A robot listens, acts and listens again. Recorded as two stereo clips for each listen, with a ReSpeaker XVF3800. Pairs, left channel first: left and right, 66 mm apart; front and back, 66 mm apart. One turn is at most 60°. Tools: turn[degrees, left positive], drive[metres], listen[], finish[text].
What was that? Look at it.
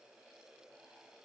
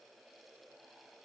Action: listen[]
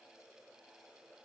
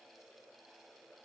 Action: listen[]
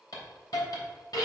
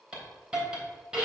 Thought: The hiss: 105° left.
Action: turn[60]
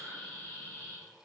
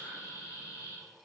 Thought: The hiss is now 25° left.
Action: turn[25]
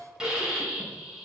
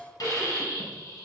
Thought: The hiss is now 10° right.
Action: turn[-10]
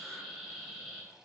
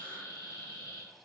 Action: finish[Found it: a hiss, straight ahead.]